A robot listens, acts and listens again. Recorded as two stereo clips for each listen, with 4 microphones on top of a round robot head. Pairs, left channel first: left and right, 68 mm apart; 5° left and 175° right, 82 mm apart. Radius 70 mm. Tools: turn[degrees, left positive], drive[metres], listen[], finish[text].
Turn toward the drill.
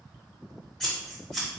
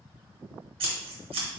Action: listen[]
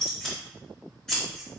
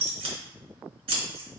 Action: listen[]
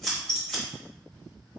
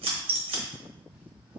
Action: finish[I can't make out a drill to turn to.]